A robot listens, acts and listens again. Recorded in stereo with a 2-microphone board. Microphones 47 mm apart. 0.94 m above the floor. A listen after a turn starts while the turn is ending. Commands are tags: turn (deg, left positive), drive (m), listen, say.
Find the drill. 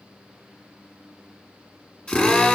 <turn deg="20"/>
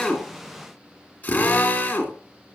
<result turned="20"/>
<turn deg="135"/>
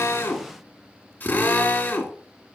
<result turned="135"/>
<turn deg="35"/>
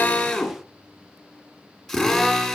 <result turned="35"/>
<say>Facing the drill, 2 to 4 m away.</say>